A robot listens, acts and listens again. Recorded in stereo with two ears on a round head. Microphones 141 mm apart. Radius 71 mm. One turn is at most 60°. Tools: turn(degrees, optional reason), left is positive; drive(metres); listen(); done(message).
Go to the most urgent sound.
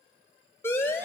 turn(degrees=15, reason="The siren: about 15° left or 165° left.")
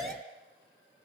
drive(metres=1.0)
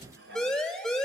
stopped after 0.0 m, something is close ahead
done("Blocked. The siren is further on, straight ahead.")